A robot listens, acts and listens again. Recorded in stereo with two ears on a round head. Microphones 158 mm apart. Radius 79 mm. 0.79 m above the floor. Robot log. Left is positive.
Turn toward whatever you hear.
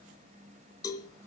note: The cowbell: about 20° left or 160° left.
cmd yaw +20
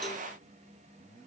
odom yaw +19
cmd idle
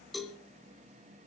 end: Found it: a cowbell, straight ahead, 2 to 4 m away.